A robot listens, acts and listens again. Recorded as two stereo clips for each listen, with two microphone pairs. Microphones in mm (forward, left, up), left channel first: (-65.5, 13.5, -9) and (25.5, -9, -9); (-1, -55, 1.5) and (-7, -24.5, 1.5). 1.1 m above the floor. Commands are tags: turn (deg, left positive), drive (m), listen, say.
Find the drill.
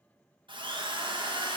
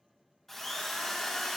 <say>Found it: a drill, straight ahead, 1 to 2 m away.</say>